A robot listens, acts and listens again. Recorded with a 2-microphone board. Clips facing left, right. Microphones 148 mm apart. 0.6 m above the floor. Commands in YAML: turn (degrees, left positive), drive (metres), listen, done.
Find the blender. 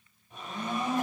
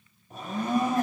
turn: -40
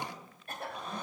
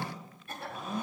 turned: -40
done: "Found it: a blender, straight ahead."